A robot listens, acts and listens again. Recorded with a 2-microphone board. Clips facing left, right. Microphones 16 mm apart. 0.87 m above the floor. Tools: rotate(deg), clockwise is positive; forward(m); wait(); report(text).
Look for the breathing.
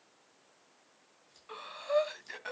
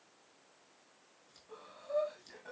rotate(-55)
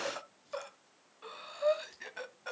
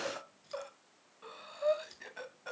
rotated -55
rotate(-15)
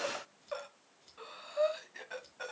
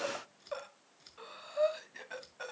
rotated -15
report("Found it: breathing, straight ahead.")